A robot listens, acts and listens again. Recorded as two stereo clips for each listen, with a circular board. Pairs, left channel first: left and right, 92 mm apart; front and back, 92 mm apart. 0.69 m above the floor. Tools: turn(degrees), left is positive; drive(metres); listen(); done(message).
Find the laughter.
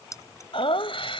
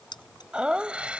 turn(degrees=105)
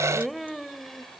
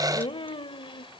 done("Found it: laughter, straight ahead.")